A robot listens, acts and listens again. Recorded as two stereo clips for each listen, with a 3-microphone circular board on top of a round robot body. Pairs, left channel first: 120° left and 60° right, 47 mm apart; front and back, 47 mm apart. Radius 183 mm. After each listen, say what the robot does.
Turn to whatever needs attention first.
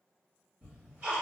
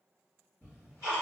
Keep listening.
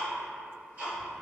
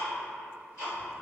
Keep listening.
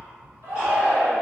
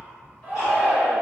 Turn 50° right.
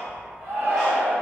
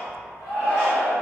Turn 10° right.
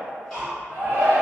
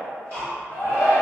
Facing the shout.